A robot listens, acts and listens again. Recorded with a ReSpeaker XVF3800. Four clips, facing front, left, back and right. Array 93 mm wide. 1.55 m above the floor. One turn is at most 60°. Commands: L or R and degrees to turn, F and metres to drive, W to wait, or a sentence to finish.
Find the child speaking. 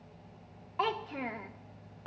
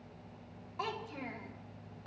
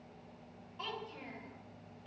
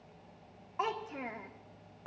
R25
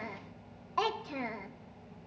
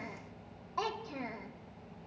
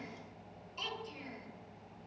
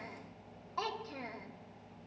Found it: a child speaking, straight ahead.